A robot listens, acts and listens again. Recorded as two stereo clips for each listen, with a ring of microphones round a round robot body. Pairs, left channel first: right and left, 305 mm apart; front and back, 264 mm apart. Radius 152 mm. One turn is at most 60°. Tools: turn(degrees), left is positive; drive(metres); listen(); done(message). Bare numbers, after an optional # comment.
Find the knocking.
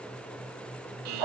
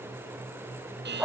listen()
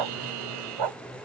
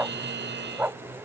listen()
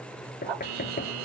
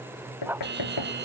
# The knocking: 25° right.
turn(-25)
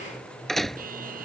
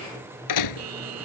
done("Facing the knocking.")